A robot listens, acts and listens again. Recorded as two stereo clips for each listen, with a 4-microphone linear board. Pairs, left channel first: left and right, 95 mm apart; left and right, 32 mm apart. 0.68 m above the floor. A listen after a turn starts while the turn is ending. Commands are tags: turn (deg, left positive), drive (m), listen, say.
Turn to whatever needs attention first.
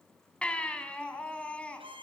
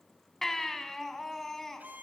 <turn deg="30"/>
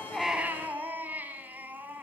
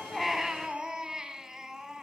<turn deg="-20"/>
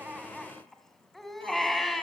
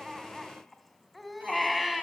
<say>Facing the baby crying, 2 to 4 m away.</say>